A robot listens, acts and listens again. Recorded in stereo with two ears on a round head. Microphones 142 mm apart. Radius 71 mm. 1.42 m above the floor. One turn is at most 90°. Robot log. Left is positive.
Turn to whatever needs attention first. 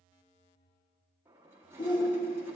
note: The shout: about 30° left or 150° left.
cmd yaw +30
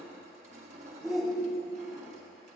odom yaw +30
end: Facing the shout.